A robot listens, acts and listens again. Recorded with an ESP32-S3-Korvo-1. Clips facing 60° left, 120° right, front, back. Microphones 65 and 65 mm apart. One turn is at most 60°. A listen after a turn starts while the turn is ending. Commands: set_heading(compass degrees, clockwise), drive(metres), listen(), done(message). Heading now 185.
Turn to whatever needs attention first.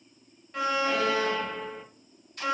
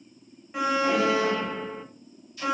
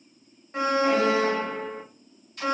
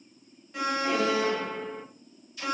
set_heading(230)
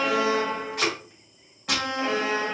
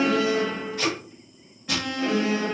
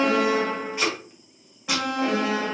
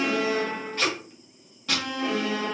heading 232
done("Facing the alarm.")